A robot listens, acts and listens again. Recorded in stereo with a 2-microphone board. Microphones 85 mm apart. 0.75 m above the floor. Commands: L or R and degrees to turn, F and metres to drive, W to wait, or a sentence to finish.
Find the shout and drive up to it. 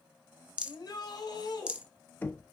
L55
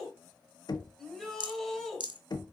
F1.0
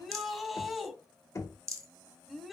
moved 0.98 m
F1.0
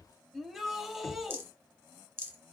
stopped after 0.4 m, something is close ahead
I am next to the shout.